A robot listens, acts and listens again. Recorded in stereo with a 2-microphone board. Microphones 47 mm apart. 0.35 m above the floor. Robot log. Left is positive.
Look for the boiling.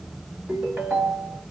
cmd idle
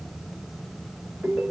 cmd idle
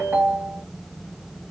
end: I can't make out boiling, only a ringtone.